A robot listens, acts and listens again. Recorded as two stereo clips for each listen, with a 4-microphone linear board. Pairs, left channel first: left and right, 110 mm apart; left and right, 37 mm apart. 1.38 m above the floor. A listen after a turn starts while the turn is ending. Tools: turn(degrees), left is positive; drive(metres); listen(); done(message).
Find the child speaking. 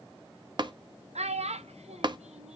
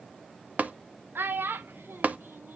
turn(degrees=-90)
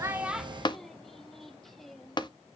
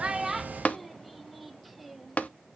done("Facing the child speaking, under 1 m away.")